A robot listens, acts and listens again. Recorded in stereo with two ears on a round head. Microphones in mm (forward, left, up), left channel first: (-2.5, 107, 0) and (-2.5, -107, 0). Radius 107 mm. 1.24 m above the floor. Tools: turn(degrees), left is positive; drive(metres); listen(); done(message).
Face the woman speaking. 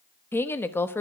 turn(degrees=30)
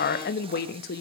turn(degrees=140)
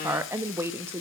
turn(degrees=-10)
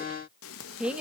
done("Found it: a woman speaking, straight ahead.")